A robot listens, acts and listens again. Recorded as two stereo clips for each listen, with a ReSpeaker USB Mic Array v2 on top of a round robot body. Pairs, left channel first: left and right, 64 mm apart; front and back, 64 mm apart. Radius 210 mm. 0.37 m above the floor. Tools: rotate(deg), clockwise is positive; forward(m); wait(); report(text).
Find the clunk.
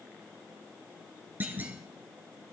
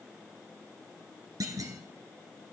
rotate(150)
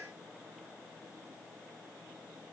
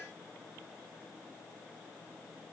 report("Facing where the clunk came from. I can't hear it now.")